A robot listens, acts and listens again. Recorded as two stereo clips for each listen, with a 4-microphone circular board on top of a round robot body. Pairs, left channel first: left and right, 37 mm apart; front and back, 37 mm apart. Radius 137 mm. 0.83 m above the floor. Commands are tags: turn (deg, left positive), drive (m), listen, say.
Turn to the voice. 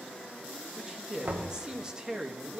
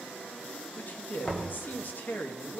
<turn deg="-25"/>
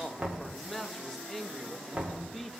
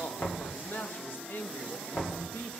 <say>Facing the man speaking.</say>